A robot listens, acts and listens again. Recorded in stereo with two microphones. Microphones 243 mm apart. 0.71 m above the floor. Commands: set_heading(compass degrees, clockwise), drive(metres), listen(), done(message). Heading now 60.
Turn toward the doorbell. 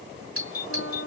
set_heading(125)
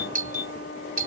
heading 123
set_heading(163)
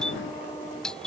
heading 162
done("Facing the doorbell.")